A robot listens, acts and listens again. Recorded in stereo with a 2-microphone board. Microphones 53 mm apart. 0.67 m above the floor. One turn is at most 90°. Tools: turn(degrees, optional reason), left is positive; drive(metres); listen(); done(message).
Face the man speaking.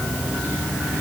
listen()
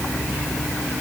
listen()
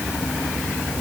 done("I can't make out a man speaking.")